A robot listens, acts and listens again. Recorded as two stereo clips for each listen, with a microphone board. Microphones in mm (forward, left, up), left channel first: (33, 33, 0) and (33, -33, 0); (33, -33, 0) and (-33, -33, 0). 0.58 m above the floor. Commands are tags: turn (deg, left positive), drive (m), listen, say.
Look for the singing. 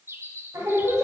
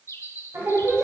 <turn deg="-130"/>
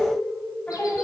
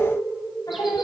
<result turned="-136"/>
<turn deg="20"/>
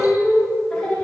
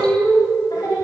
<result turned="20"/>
<turn deg="10"/>
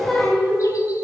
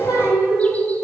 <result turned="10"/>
<turn deg="10"/>
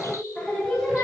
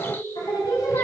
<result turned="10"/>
<turn deg="10"/>
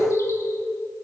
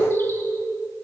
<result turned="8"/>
<say>Facing the singing, 2 to 4 m away.</say>